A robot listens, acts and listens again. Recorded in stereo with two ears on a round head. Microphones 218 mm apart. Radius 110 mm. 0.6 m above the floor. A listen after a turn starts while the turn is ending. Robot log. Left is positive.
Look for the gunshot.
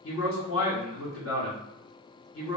cmd idle
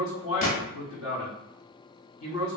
note: The gunshot: about 35° left or 145° left.
cmd yaw +35
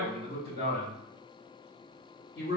cmd idle
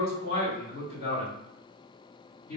end: I heard a gunshot, but can't make it out now. It was about straight ahead or 110° left.